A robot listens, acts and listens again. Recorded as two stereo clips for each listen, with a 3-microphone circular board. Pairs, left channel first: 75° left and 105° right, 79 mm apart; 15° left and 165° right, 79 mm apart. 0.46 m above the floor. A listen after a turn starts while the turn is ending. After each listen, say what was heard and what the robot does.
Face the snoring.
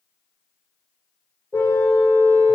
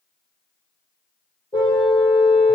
Keep listening.
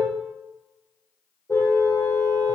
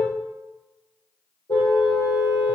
Keep listening.
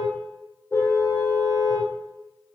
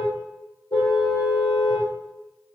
I can't make out snoring, only a car horn.